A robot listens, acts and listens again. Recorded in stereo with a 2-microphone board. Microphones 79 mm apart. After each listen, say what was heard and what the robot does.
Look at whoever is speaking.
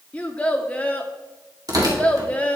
The child speaking: about 15° left or 165° left. Turn 15° left.
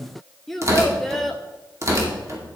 Facing the child speaking, 1 to 2 m away.